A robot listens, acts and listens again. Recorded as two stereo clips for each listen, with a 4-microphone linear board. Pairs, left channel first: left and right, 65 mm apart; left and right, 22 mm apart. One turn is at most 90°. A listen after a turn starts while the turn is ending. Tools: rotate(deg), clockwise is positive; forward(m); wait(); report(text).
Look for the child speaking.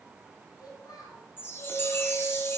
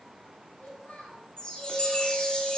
rotate(-90)
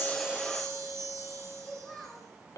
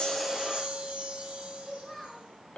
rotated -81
rotate(-10)
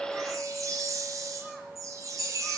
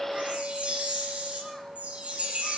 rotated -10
wait()
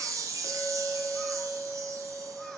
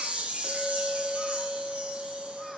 wait()
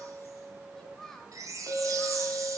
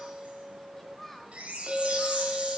rotate(-10)
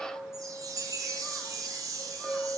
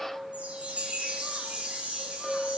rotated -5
wait()
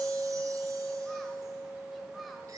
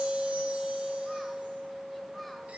wait()
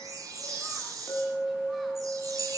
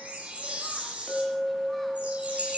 report("Facing where the child speaking came from. I can't hear it now.")